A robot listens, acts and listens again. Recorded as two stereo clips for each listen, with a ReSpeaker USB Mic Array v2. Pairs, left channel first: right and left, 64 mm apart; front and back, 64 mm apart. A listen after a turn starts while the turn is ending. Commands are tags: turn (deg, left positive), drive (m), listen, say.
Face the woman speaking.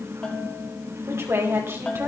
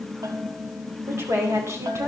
<turn deg="140"/>
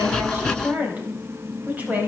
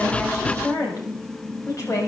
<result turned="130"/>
<turn deg="30"/>
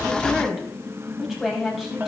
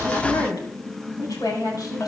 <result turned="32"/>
<say>Found it: a woman speaking, straight ahead, over 4 m away.</say>